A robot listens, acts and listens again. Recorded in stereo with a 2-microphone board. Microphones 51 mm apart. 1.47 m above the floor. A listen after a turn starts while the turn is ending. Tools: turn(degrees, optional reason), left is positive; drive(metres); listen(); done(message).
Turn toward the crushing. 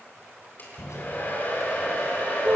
turn(degrees=90)
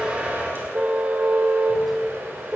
listen()
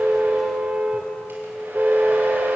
listen()
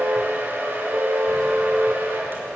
done("I heard crushing from this way, but can't make it out now.")